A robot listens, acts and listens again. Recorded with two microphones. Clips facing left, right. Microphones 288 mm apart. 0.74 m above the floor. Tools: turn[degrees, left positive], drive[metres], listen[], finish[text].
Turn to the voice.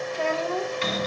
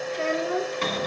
Thought: The child speaking: about 20° right or 160° right.
Action: turn[-20]
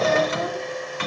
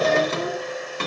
Action: listen[]
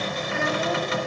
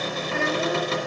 Action: listen[]
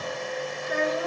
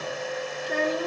Thought: So it is at 140° right.
Action: turn[-140]
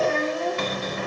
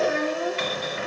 Thought: The child speaking is now 15° right.
Action: turn[-15]
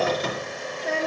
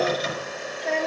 Action: finish[Facing the child speaking, 1 to 2 m away.]